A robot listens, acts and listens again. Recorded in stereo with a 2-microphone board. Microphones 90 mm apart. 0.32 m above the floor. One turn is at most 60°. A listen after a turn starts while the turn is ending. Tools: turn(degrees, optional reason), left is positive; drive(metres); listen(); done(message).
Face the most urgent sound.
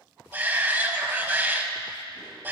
turn(degrees=-20, reason="The shout: about 20° right or 160° right.")
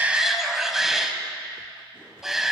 done("Found it: a shout, straight ahead, 1 to 2 m away.")